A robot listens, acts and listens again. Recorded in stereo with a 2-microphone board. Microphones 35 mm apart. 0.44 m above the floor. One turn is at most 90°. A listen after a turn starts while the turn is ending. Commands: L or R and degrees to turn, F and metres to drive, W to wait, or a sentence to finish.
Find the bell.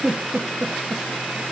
W
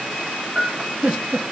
L30
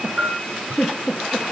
R25
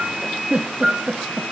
Found it: a bell, straight ahead, over 4 m away.